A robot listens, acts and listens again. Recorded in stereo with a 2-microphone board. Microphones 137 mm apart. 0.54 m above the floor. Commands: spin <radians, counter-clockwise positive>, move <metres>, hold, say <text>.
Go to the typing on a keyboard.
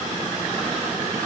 hold
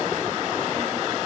hold
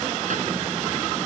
say I can't make out typing on a keyboard.